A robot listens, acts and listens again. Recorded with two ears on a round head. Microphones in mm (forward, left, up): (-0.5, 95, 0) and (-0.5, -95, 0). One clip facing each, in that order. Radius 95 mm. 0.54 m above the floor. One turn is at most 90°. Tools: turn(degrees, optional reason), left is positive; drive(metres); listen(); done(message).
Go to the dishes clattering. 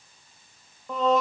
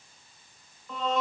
listen()
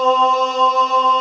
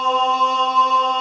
listen()
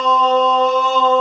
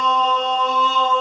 done("I can't make out dishes clattering to turn to.")